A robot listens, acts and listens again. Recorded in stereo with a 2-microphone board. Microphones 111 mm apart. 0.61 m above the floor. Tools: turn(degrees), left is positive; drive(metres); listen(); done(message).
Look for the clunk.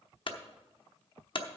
turn(degrees=50)
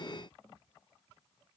listen()
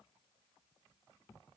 done("I heard a clunk, but can't make it out now. It was about straight ahead or 80° left.")